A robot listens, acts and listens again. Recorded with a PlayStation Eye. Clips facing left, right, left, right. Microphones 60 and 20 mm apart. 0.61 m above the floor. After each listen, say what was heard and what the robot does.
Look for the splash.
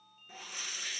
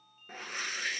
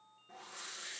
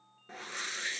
Keep listening.
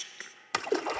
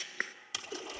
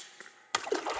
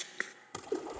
The splash: about 60° left or 120° left. Turn 60° left.
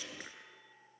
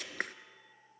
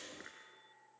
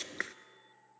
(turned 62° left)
Keep listening.
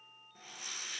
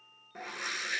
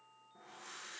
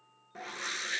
I heard a splash, but can't make it out now. It was about straight ahead or 55° left.